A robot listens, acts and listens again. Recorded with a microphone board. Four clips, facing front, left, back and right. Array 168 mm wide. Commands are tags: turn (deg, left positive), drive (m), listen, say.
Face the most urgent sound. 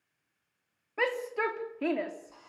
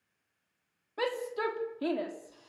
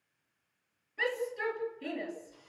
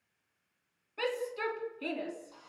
<turn deg="25"/>
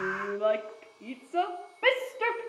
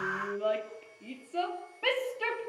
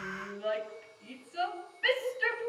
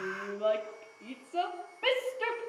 <say>Facing the shout, 2 to 4 m away.</say>